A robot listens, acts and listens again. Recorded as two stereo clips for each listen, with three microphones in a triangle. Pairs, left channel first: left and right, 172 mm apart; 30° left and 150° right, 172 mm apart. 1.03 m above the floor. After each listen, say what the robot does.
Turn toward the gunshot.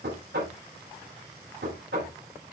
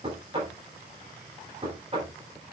Keep listening.
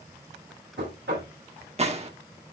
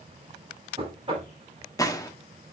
Turn 40° right.
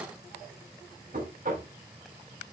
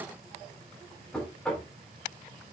Facing where the gunshot came from. I can't hear it now.